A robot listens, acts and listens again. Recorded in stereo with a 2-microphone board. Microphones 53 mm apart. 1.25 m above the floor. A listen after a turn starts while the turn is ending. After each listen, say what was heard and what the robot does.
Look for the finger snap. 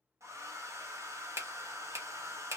The finger snap: about 60° right or 120° right. Turn 60° right.
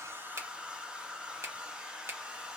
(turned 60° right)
So it is at 55° right. Turn 55° right.
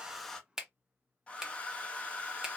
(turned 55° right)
The finger snap is now 10° right. Turn 10° right.
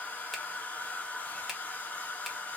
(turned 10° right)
Keep listening.
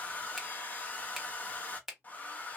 Facing the finger snap.